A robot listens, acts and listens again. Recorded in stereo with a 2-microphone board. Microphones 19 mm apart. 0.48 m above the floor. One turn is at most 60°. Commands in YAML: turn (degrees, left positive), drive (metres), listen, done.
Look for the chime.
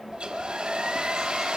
listen: true
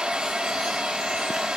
listen: true
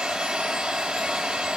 done: "I can't make out a chime, only a hair dryer."